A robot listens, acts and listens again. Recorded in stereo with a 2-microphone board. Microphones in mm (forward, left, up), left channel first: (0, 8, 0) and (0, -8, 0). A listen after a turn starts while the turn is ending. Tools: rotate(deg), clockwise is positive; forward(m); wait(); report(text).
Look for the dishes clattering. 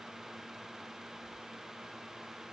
wait()
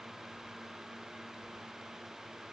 wait()
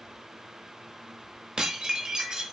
rotate(50)
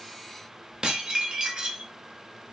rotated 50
rotate(70)
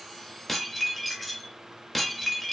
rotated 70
report("Facing the dishes clattering, under 1 m away.")